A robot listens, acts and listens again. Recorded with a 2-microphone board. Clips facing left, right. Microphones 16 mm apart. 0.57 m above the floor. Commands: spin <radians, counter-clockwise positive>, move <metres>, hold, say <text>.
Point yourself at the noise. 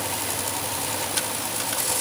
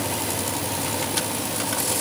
hold
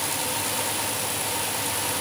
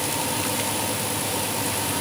hold
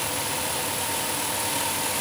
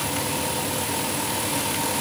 say I can't make out anything.